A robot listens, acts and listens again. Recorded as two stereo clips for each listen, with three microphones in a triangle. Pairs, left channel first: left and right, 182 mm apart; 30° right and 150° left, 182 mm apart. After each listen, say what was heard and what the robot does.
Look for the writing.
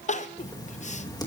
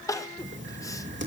The writing: 160° left. Turn 160° left.
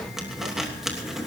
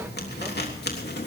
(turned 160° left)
Facing the writing, 2 to 4 m away.